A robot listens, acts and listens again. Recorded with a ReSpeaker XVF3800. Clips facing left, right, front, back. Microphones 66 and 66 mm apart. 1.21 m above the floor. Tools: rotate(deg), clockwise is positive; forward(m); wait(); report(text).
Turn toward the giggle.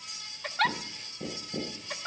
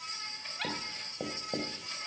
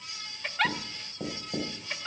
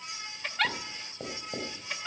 rotate(-90)
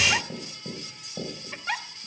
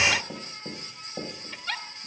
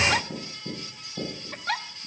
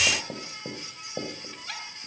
rotate(-25)
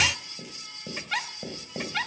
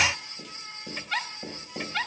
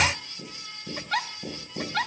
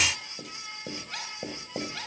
report("Facing the giggle.")